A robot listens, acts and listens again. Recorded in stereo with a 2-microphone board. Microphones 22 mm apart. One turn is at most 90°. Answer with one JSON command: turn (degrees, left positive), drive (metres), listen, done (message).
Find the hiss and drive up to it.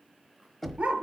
{"listen": true}
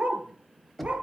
{"listen": true}
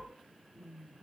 {"done": "I can't make out a hiss, only knocking and a dog barking."}